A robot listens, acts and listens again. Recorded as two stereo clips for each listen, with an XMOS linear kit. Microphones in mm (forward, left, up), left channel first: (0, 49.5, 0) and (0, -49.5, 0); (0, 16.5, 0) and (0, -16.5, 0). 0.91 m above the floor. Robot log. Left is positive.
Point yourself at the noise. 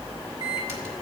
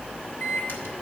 cmd yaw +90
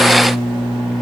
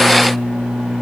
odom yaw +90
end: Facing the microwave.